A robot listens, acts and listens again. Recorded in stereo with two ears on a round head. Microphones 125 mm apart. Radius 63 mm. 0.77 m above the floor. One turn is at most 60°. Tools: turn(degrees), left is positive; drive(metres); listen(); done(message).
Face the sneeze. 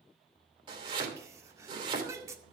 turn(degrees=-20)
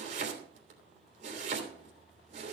listen()
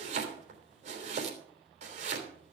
done("I heard a sneeze, but can't make it out now. It was about straight ahead or 140° right.")